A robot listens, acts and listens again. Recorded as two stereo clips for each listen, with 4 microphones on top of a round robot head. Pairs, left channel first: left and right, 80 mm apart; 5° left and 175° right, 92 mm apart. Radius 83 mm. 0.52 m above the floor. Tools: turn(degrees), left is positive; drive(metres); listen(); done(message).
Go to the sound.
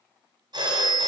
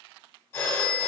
turn(degrees=-60)
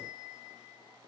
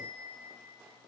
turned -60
listen()
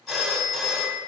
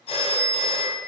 drive(metres=1.0)
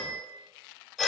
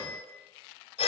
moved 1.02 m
drive(metres=1.0)
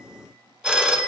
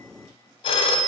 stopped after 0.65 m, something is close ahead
turn(degrees=-10)
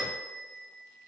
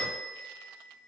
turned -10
done("I am next to the phone ringing.")